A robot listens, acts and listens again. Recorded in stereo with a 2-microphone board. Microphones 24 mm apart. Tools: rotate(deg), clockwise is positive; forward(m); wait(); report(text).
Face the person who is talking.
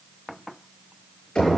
wait()
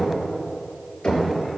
wait()
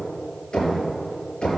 report("I can't make out anyone speaking, only knocking.")